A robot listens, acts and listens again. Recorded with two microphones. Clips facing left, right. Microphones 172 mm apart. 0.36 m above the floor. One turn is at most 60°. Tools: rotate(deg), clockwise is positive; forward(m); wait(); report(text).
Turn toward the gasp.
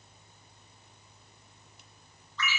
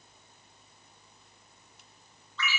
wait()
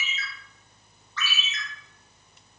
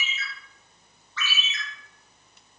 wait()
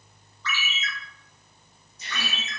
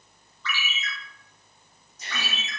rotate(45)
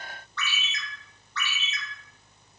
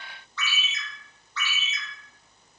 wait()
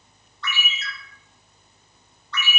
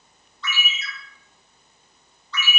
report("I heard a gasp, but can't make it out now. It was about straight ahead or 90° right.")